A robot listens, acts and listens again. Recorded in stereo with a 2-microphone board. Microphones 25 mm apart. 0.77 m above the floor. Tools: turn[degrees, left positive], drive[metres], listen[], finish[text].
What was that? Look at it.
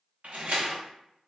Thought: The door slam: about 70° right or 110° right.
Action: turn[-70]
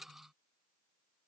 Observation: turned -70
Action: listen[]
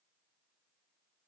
Action: finish[I heard a door slam, but can't make it out now. It was about straight ahead or 40° right.]